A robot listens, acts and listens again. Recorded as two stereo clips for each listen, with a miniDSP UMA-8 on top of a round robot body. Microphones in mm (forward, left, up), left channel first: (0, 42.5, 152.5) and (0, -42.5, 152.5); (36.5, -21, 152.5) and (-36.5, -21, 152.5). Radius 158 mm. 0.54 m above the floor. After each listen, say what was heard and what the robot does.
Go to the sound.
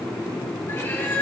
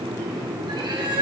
The cat meowing: 155° left. Turn 155° left.
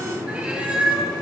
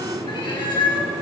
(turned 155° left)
The cat meowing is now 15° right. Turn 15° right.
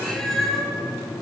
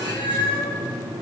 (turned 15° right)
Drive 1.0 m forward.
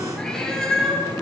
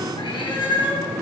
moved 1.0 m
Drive 1.0 m forward.
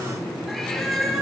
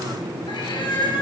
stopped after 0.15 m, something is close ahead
Something is in my way. I am facing the cat meowing but have not reached it.